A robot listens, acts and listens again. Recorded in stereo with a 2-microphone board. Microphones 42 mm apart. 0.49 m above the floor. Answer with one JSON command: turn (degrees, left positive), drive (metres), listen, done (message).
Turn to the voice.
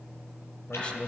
{"turn": 25}
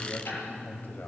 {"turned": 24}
{"turn": 130}
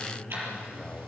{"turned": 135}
{"done": "Found it: a man speaking, straight ahead."}